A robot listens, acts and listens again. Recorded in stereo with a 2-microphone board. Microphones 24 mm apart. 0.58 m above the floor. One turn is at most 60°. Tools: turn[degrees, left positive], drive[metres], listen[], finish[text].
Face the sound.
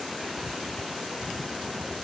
Action: listen[]
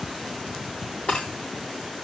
Thought: The breaking glass: about 55° left or 125° left.
Action: turn[55]
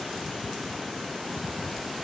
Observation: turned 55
Action: listen[]
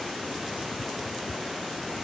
Action: finish[I heard breaking glass, but can't make it out now. It was about straight ahead or 70° left.]